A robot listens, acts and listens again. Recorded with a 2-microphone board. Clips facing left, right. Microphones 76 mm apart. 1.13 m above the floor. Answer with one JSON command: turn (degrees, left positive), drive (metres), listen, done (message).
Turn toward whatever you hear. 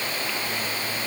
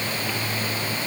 {"listen": true}
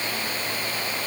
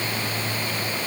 {"listen": true}
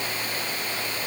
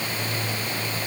{"done": "I can't make out anything to turn to."}